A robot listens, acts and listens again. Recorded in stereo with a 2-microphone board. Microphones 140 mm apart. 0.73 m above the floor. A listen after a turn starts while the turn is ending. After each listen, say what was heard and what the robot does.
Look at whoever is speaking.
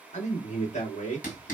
The man speaking: about 55° left or 125° left. Turn 55° left.
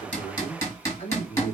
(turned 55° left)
So it is at 60° left. Turn 60° left.
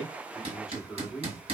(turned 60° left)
Found it: a man speaking, straight ahead, 1 to 2 m away.